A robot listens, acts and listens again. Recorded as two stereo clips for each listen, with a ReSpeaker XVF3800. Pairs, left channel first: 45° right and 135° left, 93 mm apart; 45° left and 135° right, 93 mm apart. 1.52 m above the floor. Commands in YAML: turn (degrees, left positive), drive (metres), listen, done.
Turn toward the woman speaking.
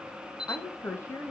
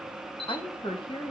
turn: 20
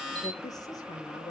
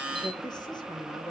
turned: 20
done: "Found it: a woman speaking, straight ahead."